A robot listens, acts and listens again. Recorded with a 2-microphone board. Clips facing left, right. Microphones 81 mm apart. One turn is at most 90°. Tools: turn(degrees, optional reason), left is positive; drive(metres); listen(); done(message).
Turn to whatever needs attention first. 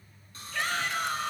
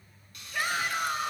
turn(degrees=-30)
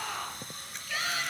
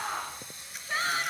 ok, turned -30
turn(degrees=-90, reason="So it is at 140° right.")
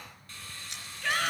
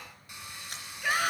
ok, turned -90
turn(degrees=-10, reason="The shout is now 10° right.")
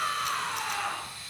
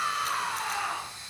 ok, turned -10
done("Facing the shout, 2 to 4 m away.")